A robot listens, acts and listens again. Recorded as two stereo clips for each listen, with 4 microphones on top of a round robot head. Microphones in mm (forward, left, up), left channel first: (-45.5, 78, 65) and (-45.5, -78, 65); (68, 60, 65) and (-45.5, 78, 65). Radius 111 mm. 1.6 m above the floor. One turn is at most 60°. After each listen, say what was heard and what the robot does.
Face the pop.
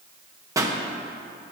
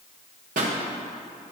The pop: 160° right. Turn 60° right.
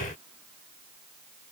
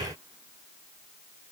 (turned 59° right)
Nothing new. It was at 100° right. Turn 60° right.
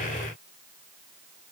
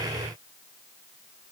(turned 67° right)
Nothing new. It was at 35° right. Turn 35° right.
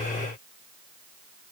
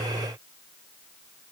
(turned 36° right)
Facing where the pop came from. I can't hear it now.